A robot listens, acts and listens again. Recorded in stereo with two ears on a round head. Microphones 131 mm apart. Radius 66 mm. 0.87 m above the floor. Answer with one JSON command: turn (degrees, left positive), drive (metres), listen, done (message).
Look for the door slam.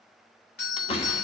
{"turn": 40}
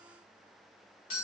{"listen": true}
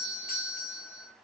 {"done": "I heard a door slam, but can't make it out now. It was about straight ahead or 100° left."}